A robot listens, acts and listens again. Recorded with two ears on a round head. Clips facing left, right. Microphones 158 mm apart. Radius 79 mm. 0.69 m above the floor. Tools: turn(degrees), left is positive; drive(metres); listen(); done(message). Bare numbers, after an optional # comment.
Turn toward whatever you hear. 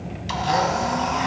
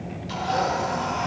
turn(90)
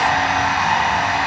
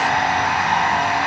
done("Found it: a blender, straight ahead.")